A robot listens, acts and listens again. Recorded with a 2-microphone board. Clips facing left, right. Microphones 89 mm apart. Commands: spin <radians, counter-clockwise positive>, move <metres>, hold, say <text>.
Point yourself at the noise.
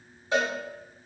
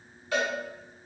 spin 0.44
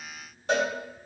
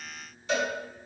spin 2.27
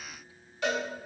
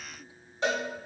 spin -0.52
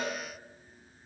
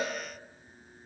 hold
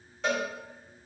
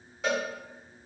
say Facing the cowbell.